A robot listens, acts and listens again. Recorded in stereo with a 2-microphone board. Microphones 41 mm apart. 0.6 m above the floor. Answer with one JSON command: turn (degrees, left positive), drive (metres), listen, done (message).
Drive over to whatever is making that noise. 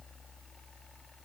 {"listen": true}
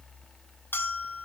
{"turn": 60}
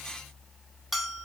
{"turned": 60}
{"drive": 1.0}
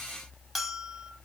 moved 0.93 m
{"drive": 1.0}
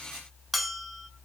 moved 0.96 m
{"drive": 1.0}
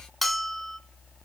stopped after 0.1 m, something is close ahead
{"done": "Arrived at the bell, straight ahead."}